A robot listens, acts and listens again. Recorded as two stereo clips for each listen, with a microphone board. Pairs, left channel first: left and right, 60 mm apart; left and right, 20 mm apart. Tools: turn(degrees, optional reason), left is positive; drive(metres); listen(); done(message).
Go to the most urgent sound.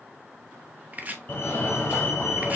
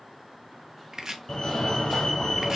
turn(degrees=35, reason="The fire alarm: about 35° left or 145° left.")
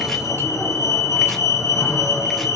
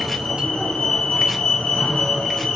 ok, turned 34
turn(degrees=105, reason="So it is at 105° left.")
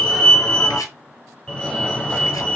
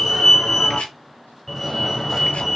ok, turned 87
turn(degrees=20, reason="The fire alarm is now 20° left.")
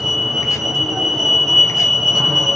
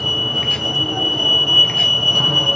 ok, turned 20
drive(metres=1.0)
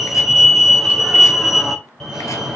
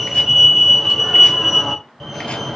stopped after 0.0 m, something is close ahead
done("Something is in my way. I am facing the fire alarm but have not reached it.")